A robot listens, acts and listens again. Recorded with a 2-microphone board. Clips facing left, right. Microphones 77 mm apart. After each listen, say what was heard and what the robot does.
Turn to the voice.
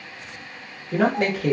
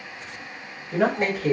The man speaking: about 65° left or 115° left. Turn 65° left.
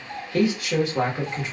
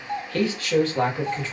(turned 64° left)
So it is at 20° left. Turn 20° left.
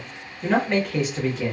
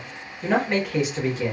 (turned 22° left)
Found it: a man speaking, straight ahead, 1 to 2 m away.